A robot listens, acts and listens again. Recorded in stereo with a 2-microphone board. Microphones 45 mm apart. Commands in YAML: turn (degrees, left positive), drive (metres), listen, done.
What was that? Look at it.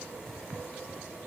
listen: true
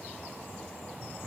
listen: true
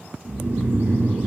turn: -55
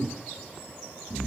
done: "Facing the snoring."